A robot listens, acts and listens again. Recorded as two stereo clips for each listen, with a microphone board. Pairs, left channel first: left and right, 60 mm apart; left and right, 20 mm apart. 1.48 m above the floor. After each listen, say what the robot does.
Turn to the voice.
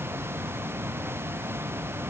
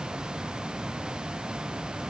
Keep listening.
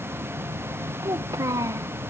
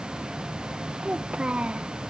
Turn 70° right.
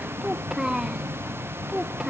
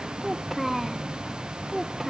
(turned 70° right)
Turn 10° right.
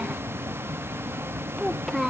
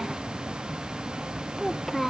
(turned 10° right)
Facing the child speaking.